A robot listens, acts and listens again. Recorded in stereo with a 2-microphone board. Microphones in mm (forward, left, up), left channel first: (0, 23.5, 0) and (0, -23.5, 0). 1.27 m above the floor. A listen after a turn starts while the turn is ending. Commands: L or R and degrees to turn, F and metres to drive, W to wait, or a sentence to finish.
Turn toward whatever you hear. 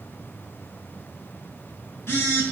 L60
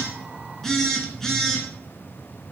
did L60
L10
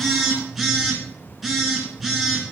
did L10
Found it: a phone buzzing, straight ahead, 2 to 4 m away.